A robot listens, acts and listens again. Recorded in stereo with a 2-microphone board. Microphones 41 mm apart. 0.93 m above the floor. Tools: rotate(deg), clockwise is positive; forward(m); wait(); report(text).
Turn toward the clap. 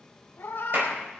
rotate(55)
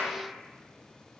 report("Found it: a clap, straight ahead.")